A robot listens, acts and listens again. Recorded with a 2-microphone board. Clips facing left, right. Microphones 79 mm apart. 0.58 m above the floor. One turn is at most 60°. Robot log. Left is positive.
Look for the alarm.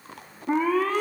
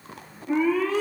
note: The alarm: about 60° left or 120° left.
cmd yaw +60
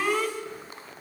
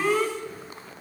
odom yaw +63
end: Found it: an alarm, straight ahead.